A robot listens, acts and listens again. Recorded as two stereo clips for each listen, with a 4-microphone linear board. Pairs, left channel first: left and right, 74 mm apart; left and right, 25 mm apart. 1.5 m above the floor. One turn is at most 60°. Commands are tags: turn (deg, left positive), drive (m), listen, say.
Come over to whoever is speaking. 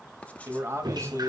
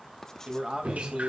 <turn deg="-35"/>
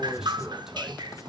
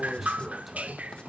<listen/>
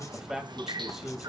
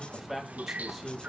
<drive m="1.0"/>
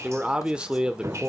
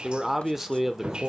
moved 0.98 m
<turn deg="-10"/>
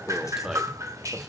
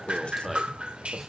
<listen/>
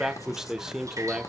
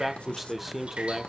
<drive m="1.0"/>
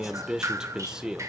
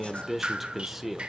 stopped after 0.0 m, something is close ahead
<turn deg="-10"/>
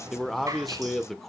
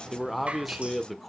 <say>I am next to the man speaking.</say>